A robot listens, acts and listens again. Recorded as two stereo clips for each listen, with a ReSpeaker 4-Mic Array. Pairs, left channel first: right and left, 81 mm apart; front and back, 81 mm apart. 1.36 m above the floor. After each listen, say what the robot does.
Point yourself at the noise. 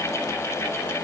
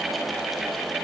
Keep listening.
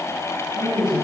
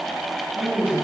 Turn 110° left.
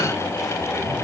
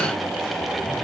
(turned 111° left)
Keep listening.
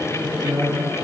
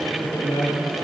Turn 15° left.
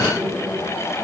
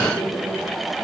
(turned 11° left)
Facing the man speaking.